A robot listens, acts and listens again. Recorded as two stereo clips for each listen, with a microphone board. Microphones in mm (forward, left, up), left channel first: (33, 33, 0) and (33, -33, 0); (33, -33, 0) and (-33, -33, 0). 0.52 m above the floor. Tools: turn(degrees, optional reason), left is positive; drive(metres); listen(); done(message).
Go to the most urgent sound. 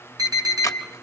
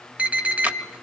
turn(degrees=-110, reason="The alarm: 110° right.")
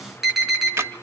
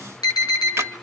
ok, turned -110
drive(metres=1.0)
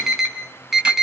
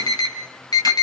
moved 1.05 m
drive(metres=1.0)
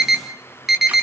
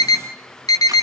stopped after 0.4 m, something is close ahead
done("Blocked. The alarm is further on, straight ahead.")